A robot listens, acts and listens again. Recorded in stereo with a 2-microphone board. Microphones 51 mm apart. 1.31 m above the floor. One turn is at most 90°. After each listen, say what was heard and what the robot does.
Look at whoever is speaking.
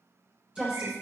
The woman speaking: about 20° right or 160° right. Turn 20° right.
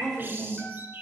Found it: a woman speaking, straight ahead, over 4 m away.